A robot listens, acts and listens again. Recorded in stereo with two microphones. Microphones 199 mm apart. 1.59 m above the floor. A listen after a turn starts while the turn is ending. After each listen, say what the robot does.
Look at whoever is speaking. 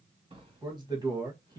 Turn 20° right.
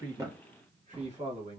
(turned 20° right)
Turn 35° right.
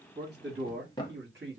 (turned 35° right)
Turn 115° right.
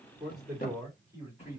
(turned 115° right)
Turn 15° right.
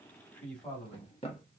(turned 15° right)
Facing the man speaking.